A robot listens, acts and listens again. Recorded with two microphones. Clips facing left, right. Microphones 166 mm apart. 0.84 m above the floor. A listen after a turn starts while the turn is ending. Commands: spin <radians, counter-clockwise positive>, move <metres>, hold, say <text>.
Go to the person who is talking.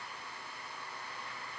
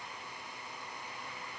hold
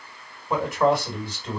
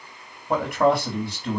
spin -1.13
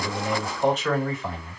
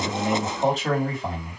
spin -0.70
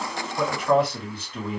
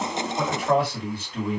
move 1.0
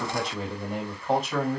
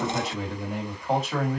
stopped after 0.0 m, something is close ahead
say Something is in my way. I am facing the man speaking but have not reached it.